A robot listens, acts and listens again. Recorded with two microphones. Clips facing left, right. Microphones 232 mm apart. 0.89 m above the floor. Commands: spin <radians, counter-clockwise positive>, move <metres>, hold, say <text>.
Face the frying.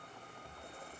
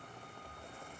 hold
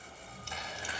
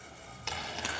spin -1.31
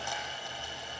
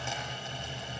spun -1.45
spin -0.35
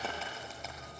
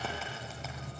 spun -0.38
hold
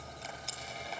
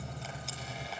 say Found it: frying, straight ahead.